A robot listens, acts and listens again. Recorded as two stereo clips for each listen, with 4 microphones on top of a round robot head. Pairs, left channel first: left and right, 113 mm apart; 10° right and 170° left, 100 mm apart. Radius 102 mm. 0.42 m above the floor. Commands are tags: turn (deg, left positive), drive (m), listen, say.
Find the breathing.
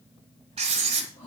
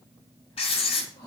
<turn deg="45"/>
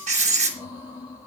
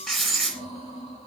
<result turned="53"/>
<turn deg="-10"/>
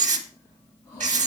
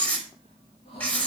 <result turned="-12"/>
<say>Found it: breathing, straight ahead.</say>